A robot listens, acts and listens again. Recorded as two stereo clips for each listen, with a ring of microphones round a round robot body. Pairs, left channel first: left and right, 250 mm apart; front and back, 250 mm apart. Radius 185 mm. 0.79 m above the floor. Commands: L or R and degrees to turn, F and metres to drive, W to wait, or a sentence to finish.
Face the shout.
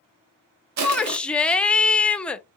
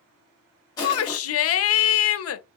Facing the shout, under 1 m away.